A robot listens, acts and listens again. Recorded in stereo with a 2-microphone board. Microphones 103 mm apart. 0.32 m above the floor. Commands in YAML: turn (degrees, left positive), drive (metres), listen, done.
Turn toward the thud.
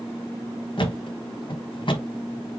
turn: 55
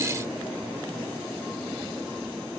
listen: true
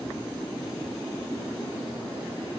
done: "I heard a thud, but can't make it out now. It was about straight ahead or 70° left."